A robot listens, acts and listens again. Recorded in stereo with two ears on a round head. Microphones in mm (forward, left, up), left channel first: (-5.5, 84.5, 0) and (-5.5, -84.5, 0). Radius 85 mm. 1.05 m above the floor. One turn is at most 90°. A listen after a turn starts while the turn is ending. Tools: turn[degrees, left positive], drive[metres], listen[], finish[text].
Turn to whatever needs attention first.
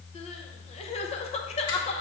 Thought: The crying: about 35° left or 145° left.
Action: turn[35]
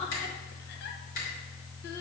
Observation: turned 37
Action: listen[]
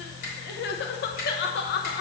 Thought: So it is at 105° left.
Action: turn[90]
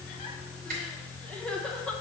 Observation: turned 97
Action: finish[Facing the crying, under 1 m away.]